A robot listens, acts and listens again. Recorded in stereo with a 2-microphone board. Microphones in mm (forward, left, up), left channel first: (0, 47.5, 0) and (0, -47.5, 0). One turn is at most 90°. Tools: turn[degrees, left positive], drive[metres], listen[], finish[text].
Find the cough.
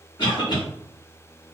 Thought: The cough: about 55° left or 125° left.
Action: turn[55]
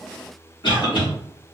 Thought: So it is at 65° left.
Action: turn[65]
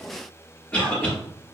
Thought: The cough is now 15° left.
Action: turn[15]
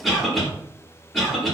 Action: finish[Found it: a cough, straight ahead, 1 to 2 m away.]